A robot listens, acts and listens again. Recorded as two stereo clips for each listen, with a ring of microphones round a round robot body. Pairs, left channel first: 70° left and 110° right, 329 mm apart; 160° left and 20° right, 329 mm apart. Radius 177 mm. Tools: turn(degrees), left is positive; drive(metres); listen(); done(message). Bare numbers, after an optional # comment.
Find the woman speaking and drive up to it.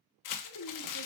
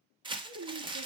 # The woman speaking: 20° left.
turn(20)
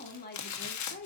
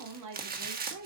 # The woman speaking is now 10° left.
turn(10)
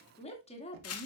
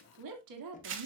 drive(1.0)
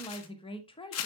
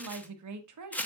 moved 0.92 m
drive(1.0)
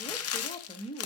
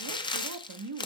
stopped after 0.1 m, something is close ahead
done("Arrived at the woman speaking, straight ahead.")